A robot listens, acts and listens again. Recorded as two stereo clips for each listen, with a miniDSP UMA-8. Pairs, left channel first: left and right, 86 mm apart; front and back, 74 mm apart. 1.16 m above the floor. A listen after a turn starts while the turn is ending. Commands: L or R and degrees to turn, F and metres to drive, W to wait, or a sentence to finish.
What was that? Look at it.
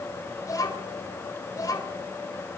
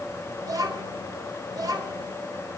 L145
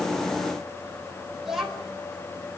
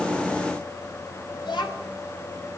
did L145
Found it: a child speaking, straight ahead, over 4 m away.